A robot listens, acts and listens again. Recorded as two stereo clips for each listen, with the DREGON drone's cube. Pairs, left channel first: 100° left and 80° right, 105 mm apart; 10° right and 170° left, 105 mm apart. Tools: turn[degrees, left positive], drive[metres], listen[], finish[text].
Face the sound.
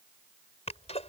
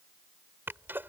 Thought: The sneeze: 100° left.
Action: turn[100]
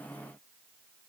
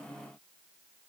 Action: finish[Facing where the sneeze came from. I can't hear it now.]